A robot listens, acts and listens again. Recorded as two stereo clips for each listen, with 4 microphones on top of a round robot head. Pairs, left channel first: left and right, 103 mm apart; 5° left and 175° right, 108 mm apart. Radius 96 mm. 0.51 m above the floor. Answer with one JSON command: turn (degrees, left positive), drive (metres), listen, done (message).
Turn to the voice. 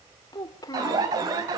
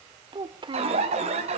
{"turn": 145}
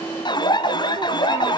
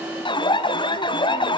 {"listen": true}
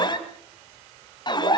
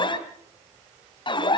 {"listen": true}
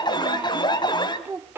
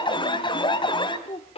{"turn": -20}
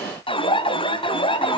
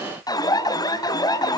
{"listen": true}
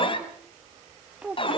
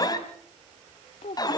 {"turn": -10}
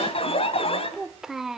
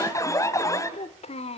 {"done": "Found it: a child speaking, straight ahead."}